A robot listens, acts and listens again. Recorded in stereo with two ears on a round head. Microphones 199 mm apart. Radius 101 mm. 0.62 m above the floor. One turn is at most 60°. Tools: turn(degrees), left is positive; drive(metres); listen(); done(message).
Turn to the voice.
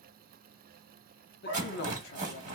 turn(degrees=45)
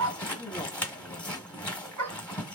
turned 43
turn(degrees=15)
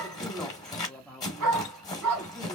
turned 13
done("Found it: a man speaking, straight ahead, under 1 m away.")